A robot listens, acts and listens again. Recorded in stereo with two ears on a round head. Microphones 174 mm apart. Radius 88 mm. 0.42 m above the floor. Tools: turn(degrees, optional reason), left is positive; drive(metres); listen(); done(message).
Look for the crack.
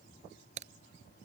turn(degrees=-40, reason="The crack: about 40° right or 140° right.")
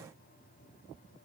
listen()
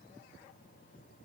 done("I heard a crack, but can't make it out now. It was about straight ahead or 100° right.")